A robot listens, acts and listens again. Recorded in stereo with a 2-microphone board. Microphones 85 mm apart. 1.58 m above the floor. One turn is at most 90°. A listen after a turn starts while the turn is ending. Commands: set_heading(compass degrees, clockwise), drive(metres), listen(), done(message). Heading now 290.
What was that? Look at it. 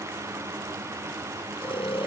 set_heading(200)
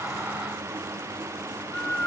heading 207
set_heading(192)
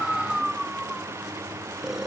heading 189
done("Facing the snoring.")